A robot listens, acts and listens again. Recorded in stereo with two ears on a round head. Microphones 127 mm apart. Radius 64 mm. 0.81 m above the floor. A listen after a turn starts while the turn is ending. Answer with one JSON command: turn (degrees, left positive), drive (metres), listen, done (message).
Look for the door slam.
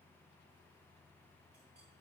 {"listen": true}
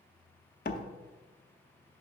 {"turn": 55}
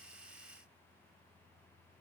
{"listen": true}
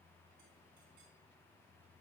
{"done": "I heard a door slam, but can't make it out now. It was about straight ahead or 70° left."}